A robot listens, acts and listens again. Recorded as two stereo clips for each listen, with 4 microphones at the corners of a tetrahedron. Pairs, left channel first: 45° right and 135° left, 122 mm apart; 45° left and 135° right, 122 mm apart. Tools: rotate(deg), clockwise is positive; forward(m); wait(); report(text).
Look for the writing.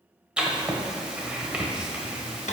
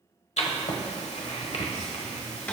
rotate(-55)
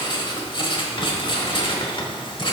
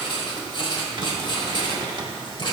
report("Found it: writing, straight ahead, 1 to 2 m away.")